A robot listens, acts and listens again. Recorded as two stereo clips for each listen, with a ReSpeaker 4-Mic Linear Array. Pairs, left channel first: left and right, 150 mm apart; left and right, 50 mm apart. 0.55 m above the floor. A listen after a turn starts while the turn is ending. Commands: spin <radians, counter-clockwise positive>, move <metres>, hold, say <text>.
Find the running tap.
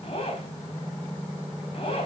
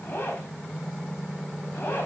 hold
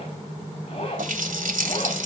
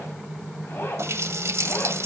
spin -1.22
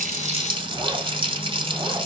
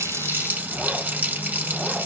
spin -0.70
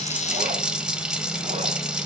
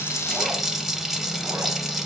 say Found it: a running tap, straight ahead.